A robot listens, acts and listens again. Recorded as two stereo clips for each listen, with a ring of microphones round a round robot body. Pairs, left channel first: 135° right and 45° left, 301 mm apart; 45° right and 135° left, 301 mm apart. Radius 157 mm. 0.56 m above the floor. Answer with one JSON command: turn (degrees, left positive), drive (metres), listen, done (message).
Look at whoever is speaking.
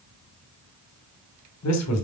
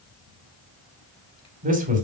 {"turn": -165}
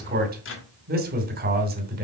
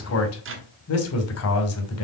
{"turn": -10}
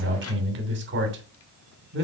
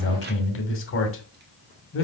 {"done": "Found it: a man speaking, straight ahead, 2 to 4 m away."}